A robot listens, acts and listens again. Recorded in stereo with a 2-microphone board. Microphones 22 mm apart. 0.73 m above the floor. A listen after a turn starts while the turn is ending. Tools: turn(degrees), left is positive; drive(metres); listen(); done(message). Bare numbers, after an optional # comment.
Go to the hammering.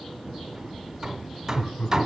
# The hammering: about 20° right or 160° right.
turn(-20)
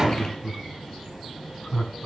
listen()
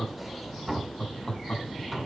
drive(1.0)
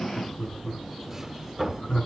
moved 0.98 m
# The hammering is now 10° right.
turn(-10)
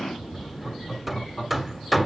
drive(1.0)
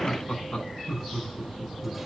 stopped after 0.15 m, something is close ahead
listen()
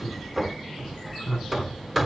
done("I am next to the hammering.")